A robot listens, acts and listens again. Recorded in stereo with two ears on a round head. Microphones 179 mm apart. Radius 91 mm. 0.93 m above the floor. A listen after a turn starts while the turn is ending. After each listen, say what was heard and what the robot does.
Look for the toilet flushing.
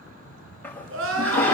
Turn 30° left.
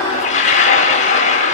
So it is at 140° left. Turn 140° left.
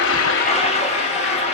The toilet flushing is now 30° left. Turn 30° left.
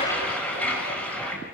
Found it: a toilet flushing, straight ahead.